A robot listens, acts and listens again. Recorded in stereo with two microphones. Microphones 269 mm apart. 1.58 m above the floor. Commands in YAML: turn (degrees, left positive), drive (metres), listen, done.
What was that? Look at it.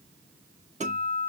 turn: -25
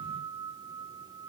done: "Facing the guitar."